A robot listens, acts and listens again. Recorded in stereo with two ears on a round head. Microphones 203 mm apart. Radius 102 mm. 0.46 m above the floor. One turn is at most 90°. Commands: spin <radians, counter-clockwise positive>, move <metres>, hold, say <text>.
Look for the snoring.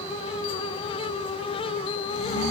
spin 1.22
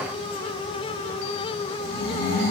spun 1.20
spin 0.70
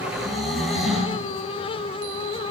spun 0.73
say Facing the snoring, over 4 m away.